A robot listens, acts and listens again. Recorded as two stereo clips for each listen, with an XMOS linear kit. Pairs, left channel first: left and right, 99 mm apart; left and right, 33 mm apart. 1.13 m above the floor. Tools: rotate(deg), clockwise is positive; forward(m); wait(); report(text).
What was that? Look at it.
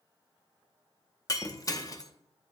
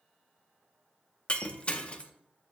rotate(-35)
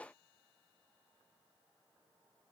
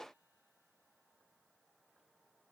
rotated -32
wait()
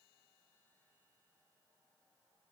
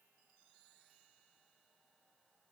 report("I heard breaking glass, but can't make it out now. It was about 5° left or 110° left.")